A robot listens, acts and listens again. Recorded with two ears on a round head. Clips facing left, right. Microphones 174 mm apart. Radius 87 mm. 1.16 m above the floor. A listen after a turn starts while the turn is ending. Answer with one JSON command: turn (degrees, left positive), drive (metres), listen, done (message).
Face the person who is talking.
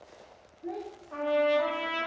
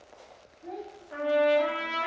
{"turn": -20}
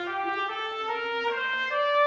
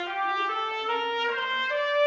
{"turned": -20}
{"listen": true}
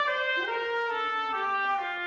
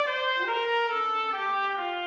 {"listen": true}
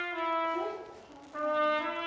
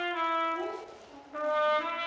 {"done": "Facing the child speaking."}